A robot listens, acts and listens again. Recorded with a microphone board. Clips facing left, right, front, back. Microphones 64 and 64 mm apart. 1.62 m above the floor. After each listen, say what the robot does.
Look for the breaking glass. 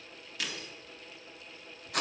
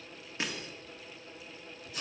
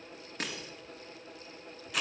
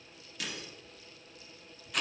Turn 35° right.
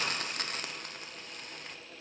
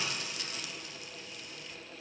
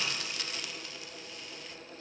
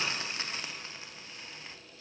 Facing where the breaking glass came from. I can't hear it now.